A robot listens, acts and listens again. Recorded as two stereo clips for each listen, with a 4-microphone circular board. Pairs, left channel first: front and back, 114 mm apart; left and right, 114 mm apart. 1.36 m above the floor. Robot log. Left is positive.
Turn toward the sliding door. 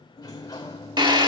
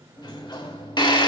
note: The sliding door: 50° left.
cmd yaw +50
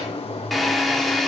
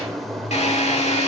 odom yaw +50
end: Found it: a sliding door, straight ahead.